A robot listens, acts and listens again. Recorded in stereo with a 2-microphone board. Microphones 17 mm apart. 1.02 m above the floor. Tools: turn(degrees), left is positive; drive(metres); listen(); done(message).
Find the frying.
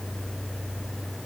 listen()
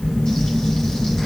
listen()
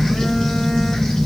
done("I can't make out frying, only a phone buzzing.")